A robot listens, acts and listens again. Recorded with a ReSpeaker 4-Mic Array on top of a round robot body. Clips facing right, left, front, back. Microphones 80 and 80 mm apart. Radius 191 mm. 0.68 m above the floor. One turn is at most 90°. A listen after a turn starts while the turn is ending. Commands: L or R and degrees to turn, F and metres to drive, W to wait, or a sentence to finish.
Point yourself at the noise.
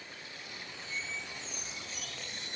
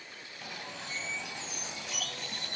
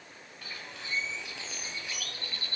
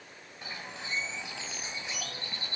L90
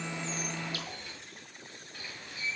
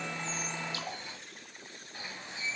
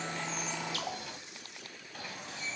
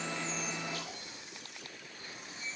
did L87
L20
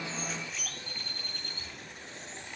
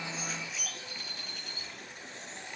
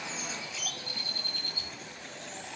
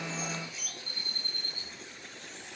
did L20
Found it: a bird, straight ahead.